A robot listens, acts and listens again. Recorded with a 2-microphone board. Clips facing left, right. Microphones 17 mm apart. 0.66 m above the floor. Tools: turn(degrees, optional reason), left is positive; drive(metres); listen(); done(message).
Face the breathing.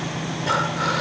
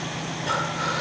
turn(degrees=15, reason="The breathing: about 15° left or 165° left.")
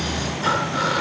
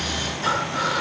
done("Found it: breathing, straight ahead, 1 to 2 m away.")